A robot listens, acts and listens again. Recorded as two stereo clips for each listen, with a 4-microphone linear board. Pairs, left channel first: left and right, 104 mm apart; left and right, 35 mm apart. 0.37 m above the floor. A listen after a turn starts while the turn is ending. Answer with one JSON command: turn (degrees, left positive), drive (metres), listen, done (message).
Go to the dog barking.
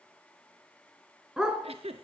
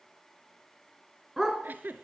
{"turn": -30}
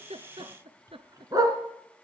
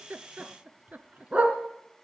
{"turn": -145}
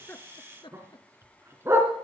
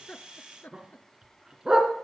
{"turn": -25}
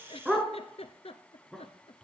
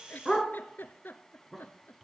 {"drive": 1.0}
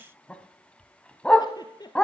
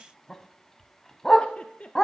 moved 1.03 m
{"turn": 10}
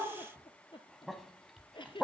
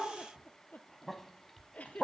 {"drive": 1.0}
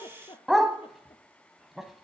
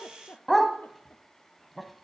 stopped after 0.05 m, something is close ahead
{"done": "Arrived at the dog barking, straight ahead."}